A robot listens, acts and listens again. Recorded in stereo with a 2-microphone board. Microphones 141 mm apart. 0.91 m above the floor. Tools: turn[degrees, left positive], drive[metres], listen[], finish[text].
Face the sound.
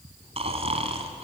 Thought: The snoring: about 50° right or 130° right.
Action: turn[-50]
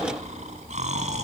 Thought: So it is at 75° right.
Action: turn[-75]
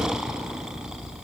Action: finish[Found it: snoring, straight ahead.]